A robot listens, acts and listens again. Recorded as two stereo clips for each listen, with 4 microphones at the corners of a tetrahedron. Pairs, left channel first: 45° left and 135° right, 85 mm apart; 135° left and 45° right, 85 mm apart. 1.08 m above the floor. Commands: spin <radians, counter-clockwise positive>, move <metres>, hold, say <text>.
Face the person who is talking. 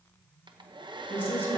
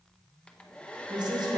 spin -0.35
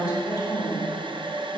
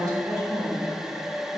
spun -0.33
say Facing the woman speaking, 2 to 4 m away.